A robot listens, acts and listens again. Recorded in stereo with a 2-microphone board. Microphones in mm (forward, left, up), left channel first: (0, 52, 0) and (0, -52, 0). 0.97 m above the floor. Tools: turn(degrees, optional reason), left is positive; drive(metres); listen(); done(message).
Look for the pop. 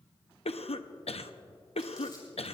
listen()
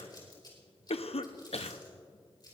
listen()
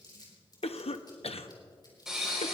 turn(degrees=-30)
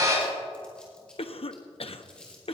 turn(degrees=-140, reason="So it is at 140° right.")
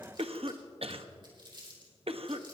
done("Facing where the pop came from. I can't hear it now.")